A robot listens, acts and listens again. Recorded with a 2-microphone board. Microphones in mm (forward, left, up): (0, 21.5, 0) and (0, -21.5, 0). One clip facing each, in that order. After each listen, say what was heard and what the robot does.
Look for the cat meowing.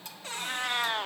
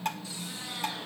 The cat meowing: about 65° left or 115° left. Turn 65° left.
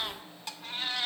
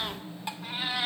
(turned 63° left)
So it is at 15° right. Turn 15° right.
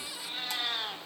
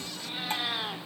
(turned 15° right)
Found it: a cat meowing, straight ahead, 2 to 4 m away.